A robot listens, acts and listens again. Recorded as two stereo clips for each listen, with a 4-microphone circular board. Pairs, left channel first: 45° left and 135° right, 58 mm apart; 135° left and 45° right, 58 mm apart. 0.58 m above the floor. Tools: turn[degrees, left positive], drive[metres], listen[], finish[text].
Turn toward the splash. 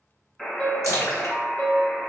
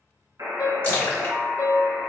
Thought: The splash: 75° left.
Action: turn[75]
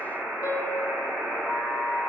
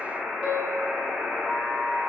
Action: finish[Facing where the splash came from. I can't hear it now.]